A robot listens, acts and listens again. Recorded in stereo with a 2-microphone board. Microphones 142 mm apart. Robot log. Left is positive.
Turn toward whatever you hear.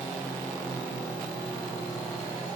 cmd idle
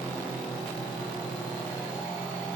cmd idle
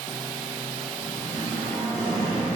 note: The singing: about 35° right or 145° right.
cmd yaw -35
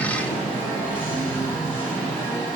note: So it is at 110° right.
cmd yaw -110
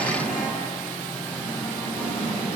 note: The singing is now 15° left.
cmd yaw +15
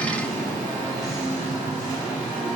end: Facing the singing.